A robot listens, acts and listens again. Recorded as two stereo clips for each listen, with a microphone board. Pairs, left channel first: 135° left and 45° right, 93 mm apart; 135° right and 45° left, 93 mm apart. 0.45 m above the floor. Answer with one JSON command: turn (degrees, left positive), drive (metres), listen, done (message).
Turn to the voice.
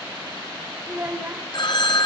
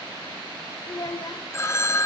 {"turn": -105}
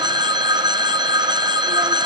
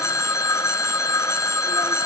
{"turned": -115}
{"turn": 10}
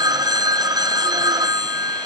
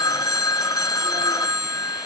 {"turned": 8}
{"listen": true}
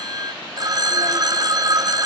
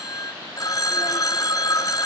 {"done": "Facing where the child speaking came from. I can't hear it now."}